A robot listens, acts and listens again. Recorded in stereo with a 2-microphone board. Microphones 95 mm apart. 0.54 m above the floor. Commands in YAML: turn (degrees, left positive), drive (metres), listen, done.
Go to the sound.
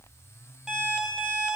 turn: -30
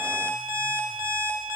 turn: -145
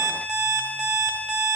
drive: 1.0
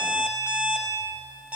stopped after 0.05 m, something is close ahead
turn: -10
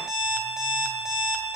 done: "Blocked. The alarm clock is further on, straight ahead."